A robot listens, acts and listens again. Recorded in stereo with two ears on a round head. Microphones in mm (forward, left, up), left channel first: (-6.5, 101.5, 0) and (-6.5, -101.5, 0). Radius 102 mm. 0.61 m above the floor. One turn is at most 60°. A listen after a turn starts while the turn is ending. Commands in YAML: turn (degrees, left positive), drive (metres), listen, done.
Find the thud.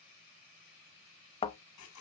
turn: 25
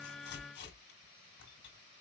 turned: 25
listen: true
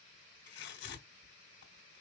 done: "I heard a thud, but can't make it out now. It was about straight ahead or 130° left."